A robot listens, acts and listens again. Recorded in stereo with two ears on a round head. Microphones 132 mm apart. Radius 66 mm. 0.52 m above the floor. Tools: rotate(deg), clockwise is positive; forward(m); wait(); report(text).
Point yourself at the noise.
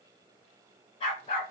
rotate(-45)
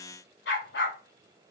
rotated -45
rotate(-100)
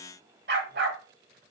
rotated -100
rotate(85)
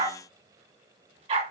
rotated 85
rotate(40)
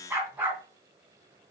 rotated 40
rotate(15)
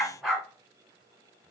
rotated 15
report("Facing the dog barking.")